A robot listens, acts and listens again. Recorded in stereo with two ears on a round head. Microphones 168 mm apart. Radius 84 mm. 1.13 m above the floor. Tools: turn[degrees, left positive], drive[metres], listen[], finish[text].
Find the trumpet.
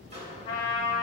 Thought: The trumpet: about 30° left or 150° left.
Action: turn[30]
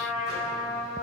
Action: finish[Found it: a trumpet, straight ahead, over 4 m away.]